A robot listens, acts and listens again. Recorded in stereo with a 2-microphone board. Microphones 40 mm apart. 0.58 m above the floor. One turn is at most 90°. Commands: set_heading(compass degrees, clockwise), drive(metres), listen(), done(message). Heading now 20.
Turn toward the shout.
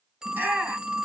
set_heading(85)
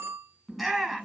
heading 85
done("Facing the shout, over 4 m away.")